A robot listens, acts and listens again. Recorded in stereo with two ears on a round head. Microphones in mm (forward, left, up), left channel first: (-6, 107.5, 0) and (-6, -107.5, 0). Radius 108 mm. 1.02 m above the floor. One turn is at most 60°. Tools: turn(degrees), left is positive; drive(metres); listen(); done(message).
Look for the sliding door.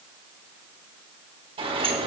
turn(degrees=-25)
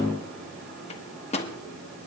listen()
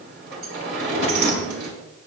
turn(degrees=-60)
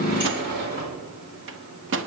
turn(degrees=-50)
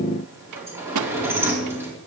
turn(degrees=-10)
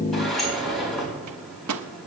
done("Found it: a sliding door, straight ahead, over 4 m away.")